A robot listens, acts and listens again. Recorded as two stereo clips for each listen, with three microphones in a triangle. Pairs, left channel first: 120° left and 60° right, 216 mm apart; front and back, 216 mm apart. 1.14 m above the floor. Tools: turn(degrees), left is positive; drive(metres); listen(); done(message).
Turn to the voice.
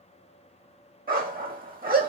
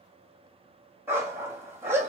listen()
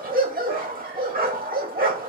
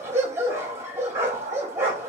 listen()
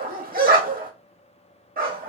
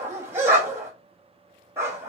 done("I can't make out anyone speaking to turn to.")